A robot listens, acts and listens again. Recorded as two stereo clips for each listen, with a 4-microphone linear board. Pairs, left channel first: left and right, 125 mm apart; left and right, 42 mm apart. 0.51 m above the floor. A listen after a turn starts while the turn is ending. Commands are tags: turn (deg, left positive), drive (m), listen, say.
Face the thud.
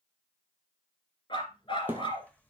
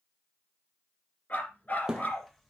<turn deg="-15"/>
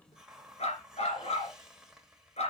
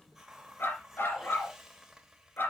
<listen/>
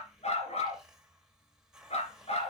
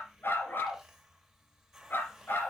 <say>I heard a thud, but can't make it out now. It was about straight ahead or 150° right.</say>